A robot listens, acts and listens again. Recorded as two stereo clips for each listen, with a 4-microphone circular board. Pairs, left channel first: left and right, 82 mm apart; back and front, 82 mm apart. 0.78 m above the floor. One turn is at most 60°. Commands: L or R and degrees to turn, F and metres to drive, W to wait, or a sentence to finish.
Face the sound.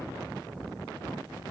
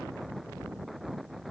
W
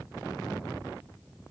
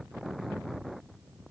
W
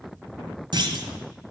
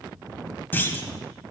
R60
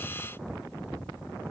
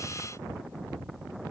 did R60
R55
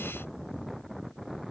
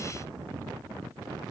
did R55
I heard a clunk from this way, but can't make it out now.